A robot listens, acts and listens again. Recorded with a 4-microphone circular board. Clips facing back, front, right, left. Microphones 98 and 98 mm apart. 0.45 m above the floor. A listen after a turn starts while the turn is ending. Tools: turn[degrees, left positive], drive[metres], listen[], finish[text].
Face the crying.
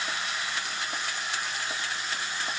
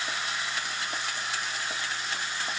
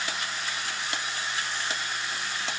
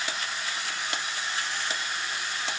Action: listen[]
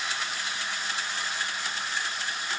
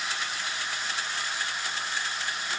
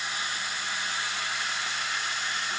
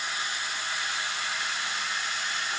Action: listen[]
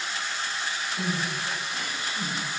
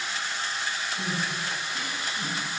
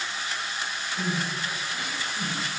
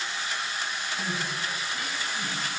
Thought: The crying: 150° right.
Action: turn[-150]
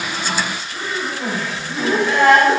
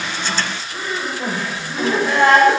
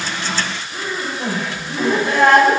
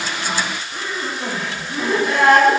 Thought: The crying is now 50° right.
Action: turn[-50]
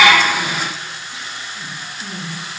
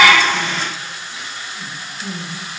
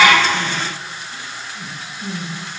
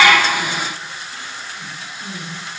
Thought: The crying is now 15° right.
Action: turn[-15]
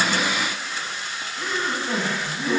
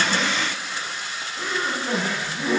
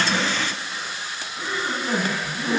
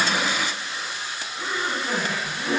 Action: finish[Facing the crying.]